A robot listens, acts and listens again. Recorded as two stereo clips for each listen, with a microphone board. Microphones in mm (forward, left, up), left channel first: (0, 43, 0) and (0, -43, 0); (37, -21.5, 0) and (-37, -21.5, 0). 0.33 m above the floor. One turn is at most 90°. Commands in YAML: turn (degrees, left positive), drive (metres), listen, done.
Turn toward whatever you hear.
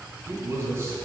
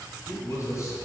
turn: -35
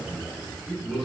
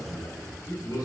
done: "Found it: a man speaking, straight ahead, 1 to 2 m away."